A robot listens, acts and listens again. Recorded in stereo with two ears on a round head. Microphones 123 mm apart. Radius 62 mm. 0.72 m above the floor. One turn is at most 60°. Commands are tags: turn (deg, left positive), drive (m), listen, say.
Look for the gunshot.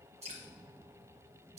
<listen/>
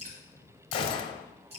<turn deg="40"/>
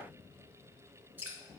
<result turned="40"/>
<listen/>
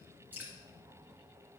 <say>I heard a gunshot, but can't make it out now. It was about straight ahead or 100° left.</say>